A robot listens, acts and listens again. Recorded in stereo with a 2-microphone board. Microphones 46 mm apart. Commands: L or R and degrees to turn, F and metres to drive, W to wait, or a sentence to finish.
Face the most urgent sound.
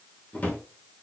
W
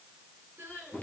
R45
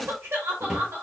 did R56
R75
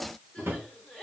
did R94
L20
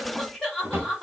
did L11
Found it: crying, straight ahead.